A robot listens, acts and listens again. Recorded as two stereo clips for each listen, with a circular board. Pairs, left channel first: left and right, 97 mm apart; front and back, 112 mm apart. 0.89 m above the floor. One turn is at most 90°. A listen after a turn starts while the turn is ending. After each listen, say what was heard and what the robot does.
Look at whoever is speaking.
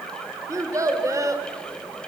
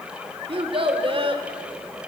The child speaking: 145° right. Turn 90° right.
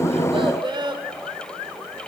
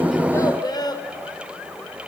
The child speaking is now 55° right. Turn 55° right.
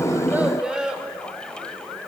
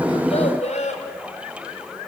The child speaking is now 10° right. Turn 10° right.
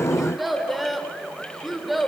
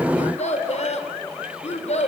Found it: a child speaking, straight ahead, 1 to 2 m away.